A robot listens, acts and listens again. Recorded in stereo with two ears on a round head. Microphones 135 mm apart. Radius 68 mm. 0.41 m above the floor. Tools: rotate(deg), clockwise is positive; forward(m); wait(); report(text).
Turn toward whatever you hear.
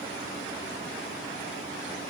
wait()
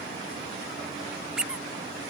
rotate(30)
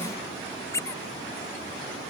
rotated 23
rotate(-20)
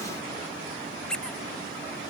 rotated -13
report("Facing the squeak.")